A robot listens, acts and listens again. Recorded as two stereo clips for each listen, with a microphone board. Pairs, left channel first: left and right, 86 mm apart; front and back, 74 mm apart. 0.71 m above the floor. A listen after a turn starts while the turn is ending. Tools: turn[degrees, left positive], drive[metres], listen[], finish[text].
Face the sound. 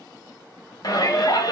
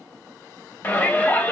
Thought: The shout: 60° left.
Action: turn[60]
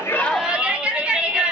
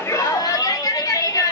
Thought: The shout is now 15° right.
Action: turn[-15]
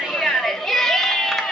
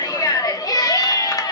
Action: finish[Facing the shout.]